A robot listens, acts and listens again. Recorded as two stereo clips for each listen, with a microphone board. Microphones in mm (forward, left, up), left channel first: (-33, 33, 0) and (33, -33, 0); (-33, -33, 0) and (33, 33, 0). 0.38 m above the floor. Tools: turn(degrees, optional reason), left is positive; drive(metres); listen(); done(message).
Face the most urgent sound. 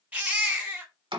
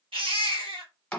turn(degrees=30, reason="The baby crying: 30° left.")
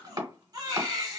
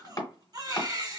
done("Facing the baby crying.")